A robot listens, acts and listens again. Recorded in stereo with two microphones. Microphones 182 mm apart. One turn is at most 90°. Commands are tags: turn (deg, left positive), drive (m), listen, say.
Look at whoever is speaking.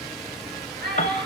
<turn deg="-65"/>
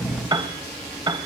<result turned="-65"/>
<listen/>
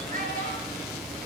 <turn deg="-50"/>
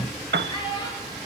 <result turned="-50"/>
<turn deg="30"/>
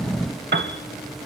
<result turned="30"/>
<listen/>
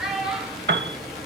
<say>Found it: a child speaking, straight ahead.</say>